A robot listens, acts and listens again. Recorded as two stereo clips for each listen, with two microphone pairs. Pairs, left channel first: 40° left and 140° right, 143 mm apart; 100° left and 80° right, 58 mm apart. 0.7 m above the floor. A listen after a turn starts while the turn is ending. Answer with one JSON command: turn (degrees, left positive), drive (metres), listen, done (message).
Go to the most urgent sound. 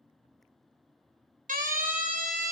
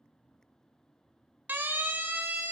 {"turn": -130}
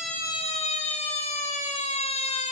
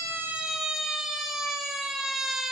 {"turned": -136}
{"drive": 1.0}
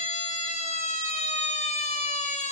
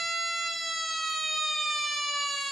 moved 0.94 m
{"turn": 10}
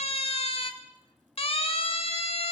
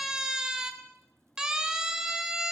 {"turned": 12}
{"drive": 1.0}
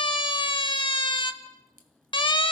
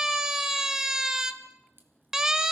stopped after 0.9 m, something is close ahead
{"done": "I am next to the siren."}